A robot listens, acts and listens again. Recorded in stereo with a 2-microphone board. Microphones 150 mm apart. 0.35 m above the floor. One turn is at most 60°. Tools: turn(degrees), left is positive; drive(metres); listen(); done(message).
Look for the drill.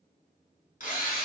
turn(degrees=60)
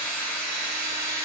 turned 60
turn(degrees=10)
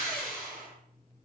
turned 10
done("Facing the drill, 2 to 4 m away.")